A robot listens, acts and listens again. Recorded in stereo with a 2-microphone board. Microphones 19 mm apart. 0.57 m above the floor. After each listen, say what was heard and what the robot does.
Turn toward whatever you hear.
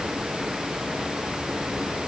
Keep listening.
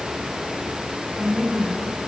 The woman speaking: about 20° right or 160° right. Turn 20° right.
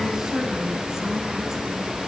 The woman speaking: about 35° right or 145° right. Turn 35° right.
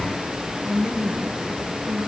So it is at 120° right. Turn 120° right.
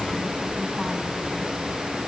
Keep listening.
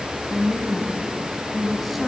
Found it: a woman speaking, straight ahead, over 4 m away.